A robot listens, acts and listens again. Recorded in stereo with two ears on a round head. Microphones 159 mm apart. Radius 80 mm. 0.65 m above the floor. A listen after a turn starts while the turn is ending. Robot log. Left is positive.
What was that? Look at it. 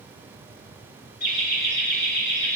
note: The laughter: about 65° left or 115° left.
cmd yaw +65
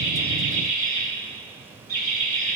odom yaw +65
note: So it is at 15° left.
cmd yaw +15
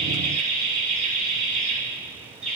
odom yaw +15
end: Facing the laughter.